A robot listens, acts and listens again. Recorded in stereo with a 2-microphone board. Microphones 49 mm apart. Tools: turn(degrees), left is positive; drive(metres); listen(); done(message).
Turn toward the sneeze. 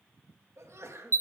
turn(degrees=-70)
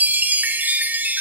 listen()
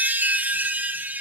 done("I heard a sneeze, but can't make it out now. It was about straight ahead or 40° right.")